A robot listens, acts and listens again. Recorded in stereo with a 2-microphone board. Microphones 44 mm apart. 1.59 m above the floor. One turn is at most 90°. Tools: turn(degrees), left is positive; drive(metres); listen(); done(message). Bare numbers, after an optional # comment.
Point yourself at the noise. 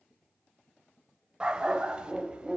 # The dog barking: about 20° right or 160° right.
turn(-20)
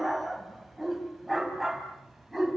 done("Facing the dog barking, over 4 m away.")